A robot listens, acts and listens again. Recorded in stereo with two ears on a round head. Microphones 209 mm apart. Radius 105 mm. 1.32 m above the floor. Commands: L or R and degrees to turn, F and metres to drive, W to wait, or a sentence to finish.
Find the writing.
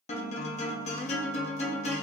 W
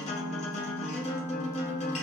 W
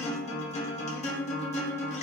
I can't make out writing, only a guitar.